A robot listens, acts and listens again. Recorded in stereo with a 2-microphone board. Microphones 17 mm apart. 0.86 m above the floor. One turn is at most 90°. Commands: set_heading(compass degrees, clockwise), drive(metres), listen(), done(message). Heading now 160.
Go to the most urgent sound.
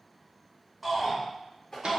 set_heading(130)
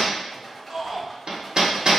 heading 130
set_heading(160)
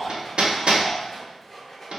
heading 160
set_heading(175)
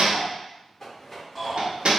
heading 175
drive(1.0)
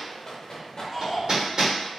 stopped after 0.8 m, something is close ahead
done("I am next to the shout.")